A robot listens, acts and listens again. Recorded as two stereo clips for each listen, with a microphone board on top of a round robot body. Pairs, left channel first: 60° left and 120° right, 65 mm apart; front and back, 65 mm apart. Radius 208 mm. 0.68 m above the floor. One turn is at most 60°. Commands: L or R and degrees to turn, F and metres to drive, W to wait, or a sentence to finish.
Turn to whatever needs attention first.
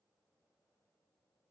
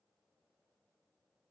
W
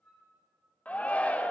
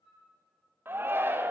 L60
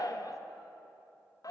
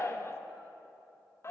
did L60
L45
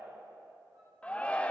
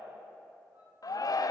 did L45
R10
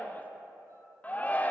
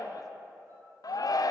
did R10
Found it: a shout, straight ahead.